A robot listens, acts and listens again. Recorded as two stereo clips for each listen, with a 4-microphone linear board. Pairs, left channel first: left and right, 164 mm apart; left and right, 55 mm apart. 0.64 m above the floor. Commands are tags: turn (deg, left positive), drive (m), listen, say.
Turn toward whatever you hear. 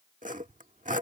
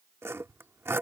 <turn deg="-50"/>
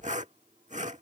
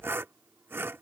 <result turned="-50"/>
<turn deg="-60"/>
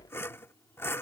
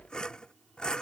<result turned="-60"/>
<turn deg="20"/>
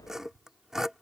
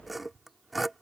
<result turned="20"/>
<say>Found it: sawing, straight ahead.</say>